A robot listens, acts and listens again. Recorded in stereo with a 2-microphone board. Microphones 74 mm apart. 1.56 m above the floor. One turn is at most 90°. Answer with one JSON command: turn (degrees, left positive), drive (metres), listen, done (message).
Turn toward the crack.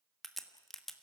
{"turn": 30}
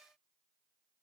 {"listen": true}
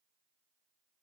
{"done": "I heard a crack, but can't make it out now. It was about 30° right or 150° left."}